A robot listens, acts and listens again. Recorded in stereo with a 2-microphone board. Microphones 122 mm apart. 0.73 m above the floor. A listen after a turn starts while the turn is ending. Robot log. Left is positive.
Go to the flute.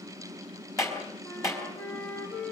note: The flute: about 15° left or 165° left.
cmd yaw +15
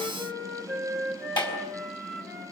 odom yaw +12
cmd fwd 1.0
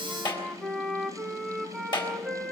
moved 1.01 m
cmd fwd 1.0
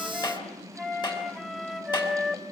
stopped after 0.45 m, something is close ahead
end: Arrived at the flute, straight ahead.